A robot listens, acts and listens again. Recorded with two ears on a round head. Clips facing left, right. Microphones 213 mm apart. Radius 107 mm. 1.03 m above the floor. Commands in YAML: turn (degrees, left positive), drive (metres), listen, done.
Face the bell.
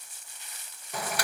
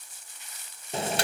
listen: true
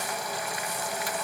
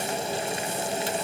listen: true
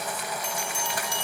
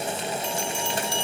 turn: 30
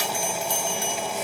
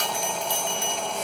turn: 135
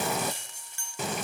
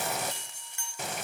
turn: 30
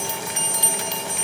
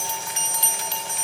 turn: 15
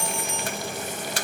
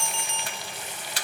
done: "Found it: a bell, straight ahead, over 4 m away."